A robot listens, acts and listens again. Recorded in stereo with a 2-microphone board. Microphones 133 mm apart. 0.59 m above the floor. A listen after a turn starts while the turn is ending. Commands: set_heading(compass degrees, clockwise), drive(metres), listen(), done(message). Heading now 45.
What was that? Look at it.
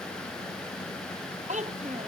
set_heading(110)
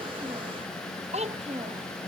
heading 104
set_heading(159)
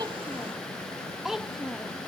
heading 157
done("Facing the child speaking.")